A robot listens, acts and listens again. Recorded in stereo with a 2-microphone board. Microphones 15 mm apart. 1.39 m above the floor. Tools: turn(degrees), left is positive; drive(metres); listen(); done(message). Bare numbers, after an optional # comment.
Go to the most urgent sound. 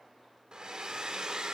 listen()
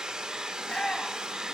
turn(90)
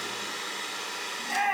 drive(1.0)
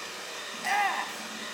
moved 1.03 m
drive(1.0)
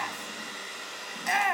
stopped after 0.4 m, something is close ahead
done("I am next to the shout.")